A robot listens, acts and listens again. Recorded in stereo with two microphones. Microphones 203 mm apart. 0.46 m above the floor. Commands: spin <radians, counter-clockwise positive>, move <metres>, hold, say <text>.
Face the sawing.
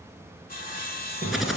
spin 0.79
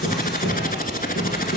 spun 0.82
hold
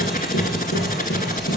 hold
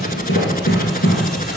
say I heard sawing, but can't make it out now. It was about straight ahead or 85° left.